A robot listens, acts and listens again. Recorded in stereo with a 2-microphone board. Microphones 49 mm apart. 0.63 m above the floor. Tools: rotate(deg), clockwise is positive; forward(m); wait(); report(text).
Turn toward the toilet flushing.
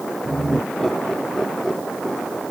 wait()
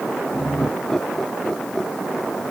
wait()
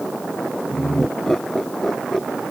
report("I can't make out a toilet flushing, only laughter.")